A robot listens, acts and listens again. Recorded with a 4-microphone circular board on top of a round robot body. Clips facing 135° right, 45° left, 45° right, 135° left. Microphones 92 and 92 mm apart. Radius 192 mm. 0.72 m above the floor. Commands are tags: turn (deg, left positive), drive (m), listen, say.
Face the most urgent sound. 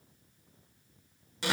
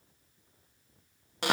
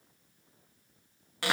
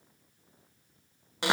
<listen/>
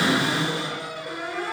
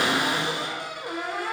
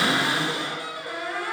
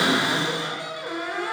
<listen/>
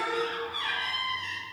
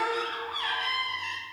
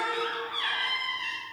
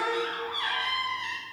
<say>I can't make out anything urgent to turn to.</say>